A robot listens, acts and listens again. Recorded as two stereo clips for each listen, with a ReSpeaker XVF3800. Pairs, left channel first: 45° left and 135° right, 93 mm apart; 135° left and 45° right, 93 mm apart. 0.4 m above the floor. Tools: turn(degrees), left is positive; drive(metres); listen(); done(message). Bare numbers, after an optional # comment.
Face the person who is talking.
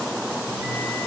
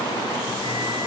listen()
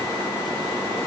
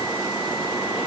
listen()
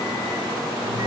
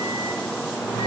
done("I can't make out anyone speaking to turn to.")